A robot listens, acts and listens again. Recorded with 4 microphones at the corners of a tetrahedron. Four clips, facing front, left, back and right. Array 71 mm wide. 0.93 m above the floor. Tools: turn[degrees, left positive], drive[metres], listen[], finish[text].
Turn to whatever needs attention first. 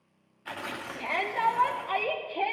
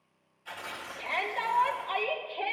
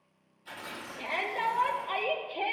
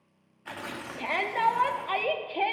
Thought: The shout: 70° right.
Action: turn[-70]
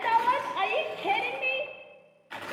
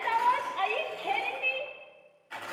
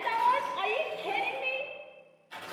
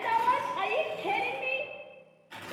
Thought: The shout is now 10° right.
Action: turn[-10]
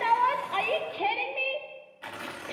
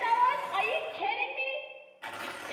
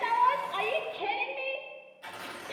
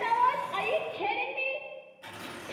Action: finish[Facing the shout.]